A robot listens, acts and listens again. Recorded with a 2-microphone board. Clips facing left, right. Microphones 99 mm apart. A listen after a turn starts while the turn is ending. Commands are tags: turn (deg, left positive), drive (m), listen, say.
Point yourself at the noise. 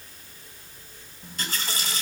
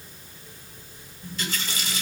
<turn deg="45"/>
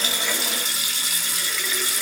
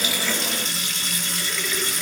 <say>Found it: a running tap, straight ahead, 1 to 2 m away.</say>